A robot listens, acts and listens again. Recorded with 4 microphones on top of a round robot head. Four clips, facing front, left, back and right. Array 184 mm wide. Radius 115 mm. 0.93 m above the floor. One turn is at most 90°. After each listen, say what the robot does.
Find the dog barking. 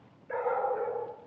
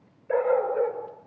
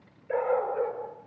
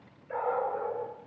Turn 90° left.
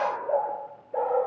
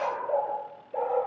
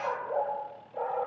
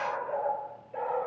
Turn 20° left.
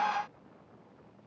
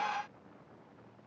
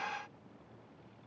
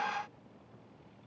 Keep listening.
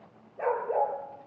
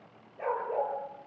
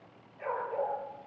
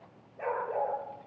Found it: a dog barking, straight ahead, over 4 m away.